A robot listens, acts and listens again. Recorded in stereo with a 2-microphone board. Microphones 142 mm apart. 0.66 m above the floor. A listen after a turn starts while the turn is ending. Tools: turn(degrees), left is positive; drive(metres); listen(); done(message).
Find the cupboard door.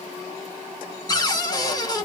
turn(degrees=25)
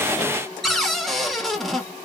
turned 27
done("Found it: a cupboard door, straight ahead, under 1 m away.")